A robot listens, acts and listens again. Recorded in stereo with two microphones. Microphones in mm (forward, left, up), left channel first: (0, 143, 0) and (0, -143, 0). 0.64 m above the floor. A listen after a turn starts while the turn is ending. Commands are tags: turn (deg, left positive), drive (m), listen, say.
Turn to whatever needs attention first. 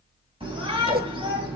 <turn deg="-20"/>
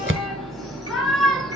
<say>Facing the shout.</say>